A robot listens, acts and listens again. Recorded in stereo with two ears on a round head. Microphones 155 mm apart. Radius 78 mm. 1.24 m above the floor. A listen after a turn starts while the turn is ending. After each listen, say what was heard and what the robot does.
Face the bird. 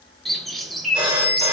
Turn 30° left.
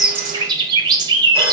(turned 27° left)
So it is at 25° right. Turn 25° right.
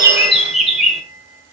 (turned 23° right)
Facing the bird.